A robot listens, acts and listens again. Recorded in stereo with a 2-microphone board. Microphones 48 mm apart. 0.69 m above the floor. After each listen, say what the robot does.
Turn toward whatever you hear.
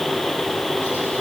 Keep listening.
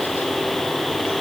Keep listening.
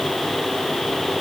I can't make out anything.